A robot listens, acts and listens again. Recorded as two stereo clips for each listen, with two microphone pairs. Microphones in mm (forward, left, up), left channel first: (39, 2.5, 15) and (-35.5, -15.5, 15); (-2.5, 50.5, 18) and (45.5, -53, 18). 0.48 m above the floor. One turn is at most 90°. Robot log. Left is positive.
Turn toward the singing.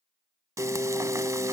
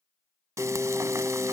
note: The singing: 30° left.
cmd yaw +30
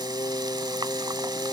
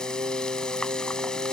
note: The singing is now 35° right.
cmd yaw -35
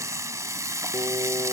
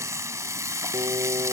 cmd idle
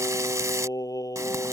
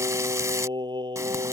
note: The singing is now 25° right.
cmd yaw -25
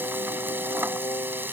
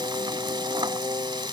note: The singing is now 10° right.
cmd yaw -10
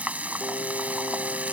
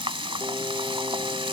cmd idle
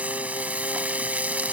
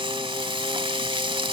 cmd idle
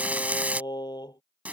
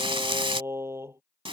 end: Found it: singing, straight ahead.